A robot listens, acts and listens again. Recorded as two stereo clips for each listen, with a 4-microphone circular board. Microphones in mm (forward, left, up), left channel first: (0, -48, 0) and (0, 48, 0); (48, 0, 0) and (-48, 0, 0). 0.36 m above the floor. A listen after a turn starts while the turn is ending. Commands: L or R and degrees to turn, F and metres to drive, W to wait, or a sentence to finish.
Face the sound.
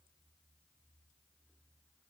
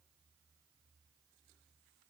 W
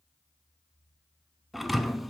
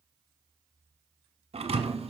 L180
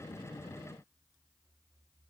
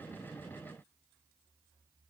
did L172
Facing where the thud came from. I can't hear it now.